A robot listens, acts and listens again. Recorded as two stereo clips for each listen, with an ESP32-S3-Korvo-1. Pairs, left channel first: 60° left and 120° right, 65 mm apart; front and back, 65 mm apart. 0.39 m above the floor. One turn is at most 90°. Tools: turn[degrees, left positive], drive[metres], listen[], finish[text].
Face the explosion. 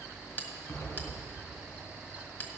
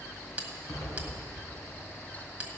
Thought: The explosion: 15° left.
Action: turn[15]
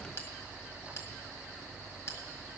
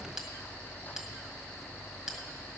Action: finish[Facing where the explosion came from. I can't hear it now.]